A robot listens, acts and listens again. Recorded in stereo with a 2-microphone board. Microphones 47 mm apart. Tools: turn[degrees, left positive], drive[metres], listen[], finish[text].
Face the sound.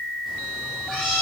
Action: turn[30]
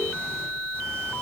Action: listen[]
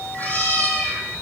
Thought: So it is at 140° left.
Action: turn[140]
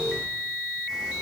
Action: listen[]
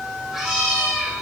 Thought: The cat meowing is now 10° right.
Action: turn[-10]
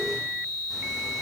Action: listen[]
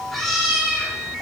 Action: finish[Facing the cat meowing, over 4 m away.]